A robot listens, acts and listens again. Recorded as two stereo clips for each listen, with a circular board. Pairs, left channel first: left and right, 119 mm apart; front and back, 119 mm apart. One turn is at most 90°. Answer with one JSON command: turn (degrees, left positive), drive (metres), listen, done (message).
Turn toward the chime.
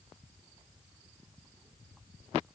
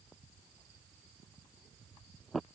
{"listen": true}
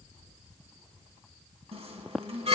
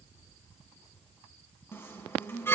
{"turn": -65}
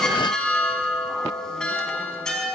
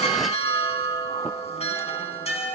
{"done": "Found it: a chime, straight ahead."}